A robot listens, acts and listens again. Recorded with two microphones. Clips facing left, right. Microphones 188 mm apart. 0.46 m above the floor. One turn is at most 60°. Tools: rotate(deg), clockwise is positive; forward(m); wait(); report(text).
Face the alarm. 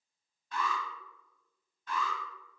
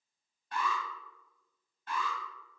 rotate(60)
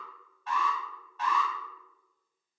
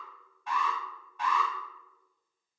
rotate(15)
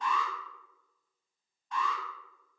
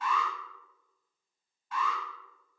report("Found it: an alarm, straight ahead.")